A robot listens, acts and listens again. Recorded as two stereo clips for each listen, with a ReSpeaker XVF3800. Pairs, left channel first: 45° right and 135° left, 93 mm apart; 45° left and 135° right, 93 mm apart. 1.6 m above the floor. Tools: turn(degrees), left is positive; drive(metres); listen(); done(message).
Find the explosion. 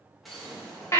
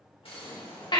turn(degrees=45)
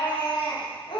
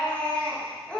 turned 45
done("Facing where the explosion came from. I can't hear it now.")